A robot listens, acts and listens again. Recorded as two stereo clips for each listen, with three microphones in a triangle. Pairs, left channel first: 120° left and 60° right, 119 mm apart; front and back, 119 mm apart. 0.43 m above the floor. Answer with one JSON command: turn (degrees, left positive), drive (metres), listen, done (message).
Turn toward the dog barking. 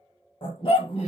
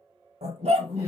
{"turn": 160}
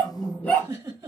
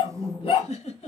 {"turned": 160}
{"turn": 40}
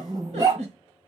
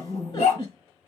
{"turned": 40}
{"done": "Found it: a dog barking, straight ahead, under 1 m away."}